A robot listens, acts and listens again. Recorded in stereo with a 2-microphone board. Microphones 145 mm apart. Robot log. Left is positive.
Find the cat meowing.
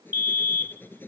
cmd idle
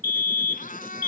note: The cat meowing: about 75° left or 105° left.
cmd yaw +75
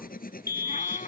note: So it is at 65° left.
cmd yaw +65
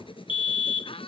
note: The cat meowing is now 40° left.
cmd yaw +40
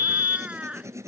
note: The cat meowing is now 10° right.
cmd yaw -10
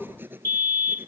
cmd idle
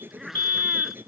end: Facing the cat meowing.